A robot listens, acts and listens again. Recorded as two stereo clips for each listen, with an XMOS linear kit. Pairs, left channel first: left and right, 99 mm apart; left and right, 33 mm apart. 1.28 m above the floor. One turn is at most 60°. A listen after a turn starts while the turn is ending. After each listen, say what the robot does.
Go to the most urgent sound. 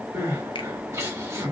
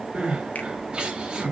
Turn 30° right.
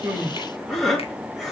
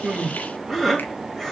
Drive 1.0 m forward.
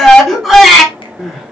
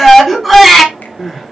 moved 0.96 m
Drive 1.0 m forward.
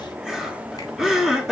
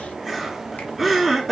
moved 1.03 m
Drive 1.0 m forward.
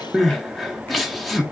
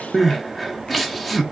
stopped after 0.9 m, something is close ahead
Arrived at the crying, straight ahead.